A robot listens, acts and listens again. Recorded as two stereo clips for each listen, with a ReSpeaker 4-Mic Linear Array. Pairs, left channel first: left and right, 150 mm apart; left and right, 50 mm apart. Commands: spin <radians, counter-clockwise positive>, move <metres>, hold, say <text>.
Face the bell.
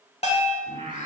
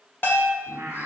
spin 0.79
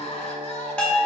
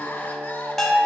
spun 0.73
spin 0.17
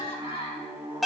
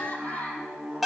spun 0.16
say Found it: a bell, straight ahead.